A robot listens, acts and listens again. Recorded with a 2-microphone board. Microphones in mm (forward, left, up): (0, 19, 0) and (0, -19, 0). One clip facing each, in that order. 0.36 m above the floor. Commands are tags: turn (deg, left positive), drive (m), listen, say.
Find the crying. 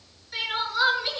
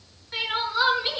<turn deg="-30"/>
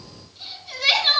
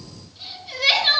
<say>Facing the crying, over 4 m away.</say>